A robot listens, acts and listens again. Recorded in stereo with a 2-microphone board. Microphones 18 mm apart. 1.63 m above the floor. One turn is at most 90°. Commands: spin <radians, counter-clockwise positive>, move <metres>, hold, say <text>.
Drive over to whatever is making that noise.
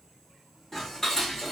spin 0.52
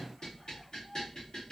spin 1.57
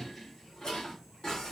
spin 0.96
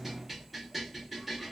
move 1.0
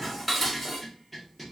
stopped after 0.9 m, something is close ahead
say Arrived at the dishes clattering, straight ahead.